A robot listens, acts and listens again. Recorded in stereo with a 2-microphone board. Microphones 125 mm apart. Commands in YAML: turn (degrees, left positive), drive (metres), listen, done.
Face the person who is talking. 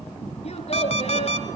turn: 55
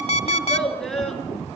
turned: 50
done: "Facing the child speaking, over 4 m away."